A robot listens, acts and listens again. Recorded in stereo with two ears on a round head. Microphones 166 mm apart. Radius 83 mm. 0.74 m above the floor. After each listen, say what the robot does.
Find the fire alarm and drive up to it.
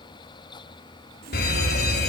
Turn 55° left.
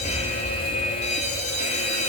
Turn 50° left.
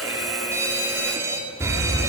Turn 20° right.
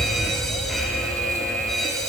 Drive 1.0 m forward.
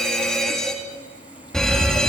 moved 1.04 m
Drive 1.0 m forward.
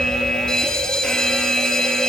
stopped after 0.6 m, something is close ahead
Arrived at the fire alarm, straight ahead.